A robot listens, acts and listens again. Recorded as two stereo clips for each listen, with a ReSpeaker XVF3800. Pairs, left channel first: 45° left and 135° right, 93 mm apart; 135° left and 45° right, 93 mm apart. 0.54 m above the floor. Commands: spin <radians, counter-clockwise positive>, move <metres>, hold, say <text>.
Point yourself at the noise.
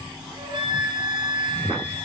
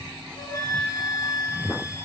spin -2.97
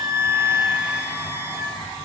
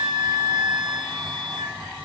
spin -1.31
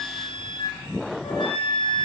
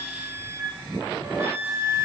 spin 0.35
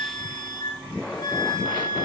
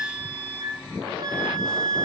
say Found it: a flute, straight ahead.